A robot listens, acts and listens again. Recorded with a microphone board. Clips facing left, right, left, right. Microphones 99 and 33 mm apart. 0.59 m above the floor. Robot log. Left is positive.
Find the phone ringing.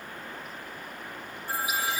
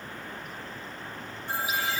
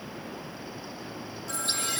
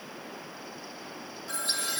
note: The phone ringing: about 25° right or 155° right.
cmd yaw -25
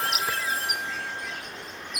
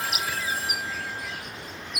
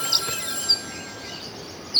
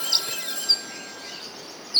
end: Found it: a phone ringing, straight ahead, 2 to 4 m away.